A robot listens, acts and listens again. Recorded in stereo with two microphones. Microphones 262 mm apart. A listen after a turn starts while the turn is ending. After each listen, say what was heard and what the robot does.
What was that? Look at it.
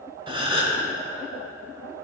The gasp: about 20° right or 160° right. Turn 20° right.
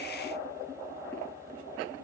Keep listening.
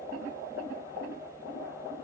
I heard a gasp, but can't make it out now. It was about straight ahead or 140° right.